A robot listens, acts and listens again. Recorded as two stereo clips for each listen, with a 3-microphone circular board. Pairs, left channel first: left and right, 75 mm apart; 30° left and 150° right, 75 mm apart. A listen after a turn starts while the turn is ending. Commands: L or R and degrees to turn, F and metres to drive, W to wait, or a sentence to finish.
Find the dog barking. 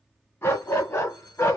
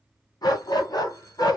L45
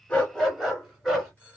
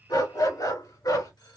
Found it: a dog barking, straight ahead.